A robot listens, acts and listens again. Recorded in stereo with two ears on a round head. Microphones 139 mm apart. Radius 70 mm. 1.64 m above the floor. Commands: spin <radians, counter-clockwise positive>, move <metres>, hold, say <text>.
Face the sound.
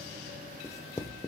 spin 0.35
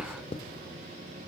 spin 2.44
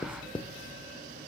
spin 0.52
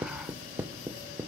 spin -0.17
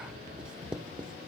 say Facing the writing, 1 to 2 m away.